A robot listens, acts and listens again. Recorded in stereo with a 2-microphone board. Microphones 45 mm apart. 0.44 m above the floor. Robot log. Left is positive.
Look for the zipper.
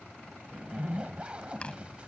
note: The zipper: about 25° right or 155° right.
cmd yaw -25
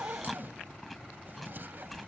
note: So it is at 130° right.
cmd yaw -130
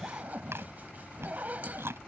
note: The zipper is now 40° right.
cmd yaw -40
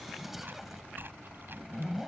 end: Facing the zipper.